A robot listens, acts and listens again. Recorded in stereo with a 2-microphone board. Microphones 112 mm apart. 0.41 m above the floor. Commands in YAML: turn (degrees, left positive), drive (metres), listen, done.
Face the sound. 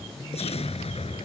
turn: 65
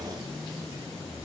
listen: true
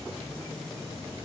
done: "I heard an explosion, but can't make it out now. It was about straight ahead or 50° left."